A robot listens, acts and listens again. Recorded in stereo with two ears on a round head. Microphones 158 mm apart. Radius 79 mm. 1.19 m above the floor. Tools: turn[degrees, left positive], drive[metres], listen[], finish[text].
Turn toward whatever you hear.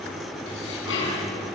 Action: turn[90]
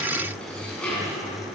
Action: finish[Found it: dishes clattering, straight ahead.]